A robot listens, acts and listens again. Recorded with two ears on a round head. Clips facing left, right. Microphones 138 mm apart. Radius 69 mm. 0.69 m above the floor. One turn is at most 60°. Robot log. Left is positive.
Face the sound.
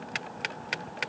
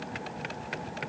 cmd idle
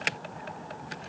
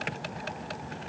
cmd idle
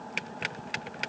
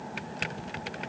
end: I can't make out anything.